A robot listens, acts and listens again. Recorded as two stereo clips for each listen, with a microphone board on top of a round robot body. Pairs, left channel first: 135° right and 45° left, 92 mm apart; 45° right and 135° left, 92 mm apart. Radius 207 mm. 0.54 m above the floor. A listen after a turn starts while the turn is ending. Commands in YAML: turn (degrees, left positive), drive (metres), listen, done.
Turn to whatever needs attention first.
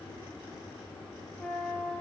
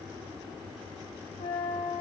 listen: true
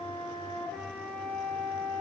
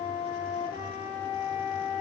listen: true
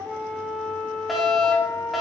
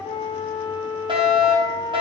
turn: 135
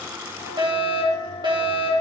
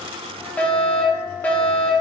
turn: 25
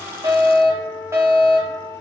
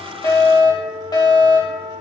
turn: -10
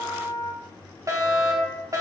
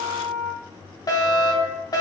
done: "Facing the fire alarm."